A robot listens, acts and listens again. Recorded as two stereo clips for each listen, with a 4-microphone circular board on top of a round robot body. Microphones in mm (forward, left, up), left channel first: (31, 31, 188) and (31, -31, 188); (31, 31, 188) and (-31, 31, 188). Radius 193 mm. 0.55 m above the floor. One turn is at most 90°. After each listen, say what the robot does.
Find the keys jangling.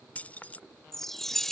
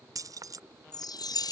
Turn 90° left.
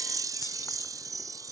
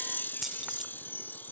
Turn 65° left.
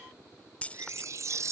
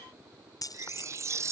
Turn 20° left.
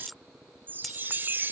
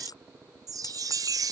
Facing the keys jangling.